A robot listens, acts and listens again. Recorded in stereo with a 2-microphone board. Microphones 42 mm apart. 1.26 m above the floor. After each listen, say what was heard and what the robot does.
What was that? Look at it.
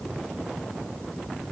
Keep listening.
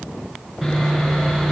Turn 30° right.
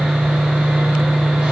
So it is at 145° right. Turn 145° right.
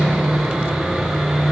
Found it: sawing, straight ahead.